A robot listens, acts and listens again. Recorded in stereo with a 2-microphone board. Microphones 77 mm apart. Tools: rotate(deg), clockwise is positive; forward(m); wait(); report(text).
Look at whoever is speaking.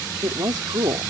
rotate(70)
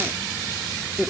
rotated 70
report("Found it: a woman speaking, straight ahead.")